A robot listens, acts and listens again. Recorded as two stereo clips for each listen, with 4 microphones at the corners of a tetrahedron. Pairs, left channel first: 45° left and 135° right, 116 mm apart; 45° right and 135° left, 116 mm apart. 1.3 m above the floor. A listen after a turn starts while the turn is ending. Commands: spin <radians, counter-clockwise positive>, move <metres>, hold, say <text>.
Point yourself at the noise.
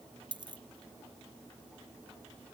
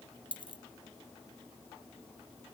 spin -1.57
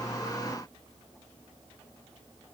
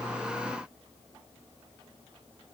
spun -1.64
say I heard a dropped coin from this way, but can't make it out now.